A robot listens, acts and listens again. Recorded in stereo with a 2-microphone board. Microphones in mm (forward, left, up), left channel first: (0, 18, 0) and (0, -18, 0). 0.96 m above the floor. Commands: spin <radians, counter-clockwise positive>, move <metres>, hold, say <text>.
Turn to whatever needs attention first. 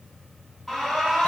spin 0.52
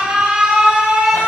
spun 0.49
spin -0.35
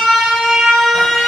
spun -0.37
say Found it: an alarm, straight ahead.